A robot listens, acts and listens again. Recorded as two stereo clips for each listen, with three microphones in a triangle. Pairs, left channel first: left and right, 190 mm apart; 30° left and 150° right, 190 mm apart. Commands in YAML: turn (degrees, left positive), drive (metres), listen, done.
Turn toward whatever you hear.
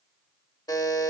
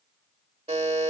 turn: 160
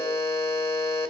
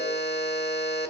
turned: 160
turn: 15
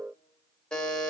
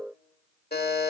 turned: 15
done: "Found it: a buzzer, straight ahead."